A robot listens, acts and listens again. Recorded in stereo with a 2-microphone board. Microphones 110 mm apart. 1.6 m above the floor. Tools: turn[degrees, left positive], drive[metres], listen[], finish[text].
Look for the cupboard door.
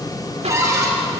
Thought: The cupboard door: about 30° right or 150° right.
Action: turn[-30]
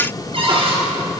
Thought: So it is at 125° right.
Action: turn[-125]
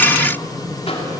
Action: listen[]
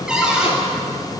Action: finish[Found it: a cupboard door, straight ahead.]